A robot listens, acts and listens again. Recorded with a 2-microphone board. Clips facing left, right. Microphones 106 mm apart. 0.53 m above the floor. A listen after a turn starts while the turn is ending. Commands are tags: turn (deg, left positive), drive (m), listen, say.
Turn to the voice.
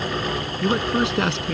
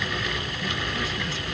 <turn deg="90"/>
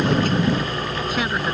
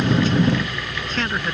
<turn deg="10"/>
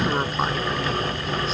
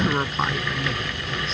<say>Facing the man speaking.</say>